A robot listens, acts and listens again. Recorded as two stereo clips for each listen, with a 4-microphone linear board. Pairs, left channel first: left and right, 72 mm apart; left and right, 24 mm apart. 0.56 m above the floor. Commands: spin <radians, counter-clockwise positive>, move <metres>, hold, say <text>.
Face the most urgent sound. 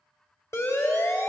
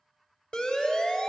spin 0.70
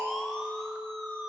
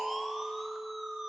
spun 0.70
say Found it: a siren, straight ahead, 2 to 4 m away.